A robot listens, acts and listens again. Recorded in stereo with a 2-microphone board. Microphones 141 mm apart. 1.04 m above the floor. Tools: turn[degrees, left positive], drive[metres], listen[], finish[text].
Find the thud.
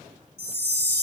Action: listen[]
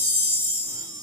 Action: listen[]
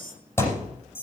Thought: The thud: about 15° left or 165° left.
Action: turn[15]
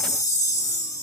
Action: listen[]
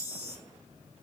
Action: finish[I heard a thud, but can't make it out now. It was about straight ahead or 150° left.]